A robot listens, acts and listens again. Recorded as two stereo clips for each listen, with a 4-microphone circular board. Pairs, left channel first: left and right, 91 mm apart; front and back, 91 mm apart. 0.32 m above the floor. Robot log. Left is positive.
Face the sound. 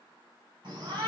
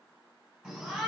note: The shout: 90° right.
cmd yaw -90
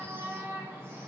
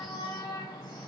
note: The shout is now 25° right.
cmd yaw -25
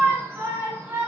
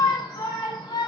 note: The shout is now 20° right.
cmd yaw -20
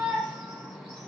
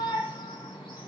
end: Facing the shout.